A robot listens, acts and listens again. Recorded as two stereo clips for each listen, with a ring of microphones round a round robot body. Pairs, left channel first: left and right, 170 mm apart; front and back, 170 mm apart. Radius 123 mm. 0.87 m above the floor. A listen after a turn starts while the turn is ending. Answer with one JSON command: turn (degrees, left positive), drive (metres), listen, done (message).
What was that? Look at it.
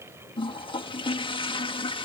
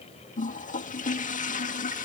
{"turn": 35}
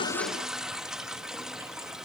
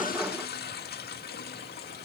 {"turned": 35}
{"done": "Facing the toilet flushing."}